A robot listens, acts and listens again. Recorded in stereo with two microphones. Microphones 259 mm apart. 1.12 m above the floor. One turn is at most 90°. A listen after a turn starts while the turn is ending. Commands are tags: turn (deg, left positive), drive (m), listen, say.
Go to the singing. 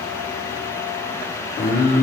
<turn deg="40"/>
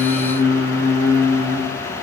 <turn deg="90"/>
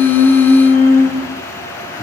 <turn deg="35"/>
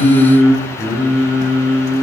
<drive m="1.0"/>
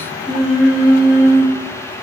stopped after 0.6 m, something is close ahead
<say>Something is in my way. I am facing the singing but have not reached it.</say>